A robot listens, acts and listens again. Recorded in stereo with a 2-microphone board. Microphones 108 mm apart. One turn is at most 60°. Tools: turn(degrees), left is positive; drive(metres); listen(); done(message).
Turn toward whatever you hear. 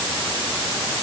listen()
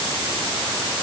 listen()
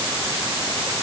done("I can't make out anything to turn to.")